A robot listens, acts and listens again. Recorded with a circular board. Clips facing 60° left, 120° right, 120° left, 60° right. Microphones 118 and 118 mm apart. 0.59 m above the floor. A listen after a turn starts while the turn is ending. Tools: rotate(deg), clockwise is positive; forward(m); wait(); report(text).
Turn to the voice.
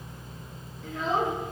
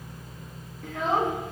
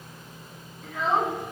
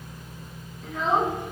rotate(150)
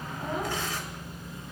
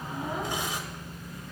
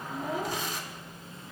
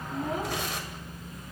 wait()
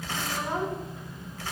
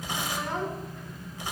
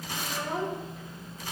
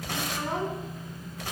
rotate(15)
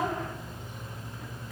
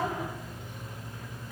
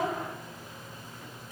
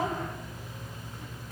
wait()
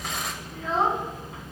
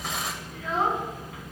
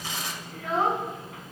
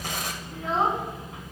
report("Facing the child speaking, 2 to 4 m away.")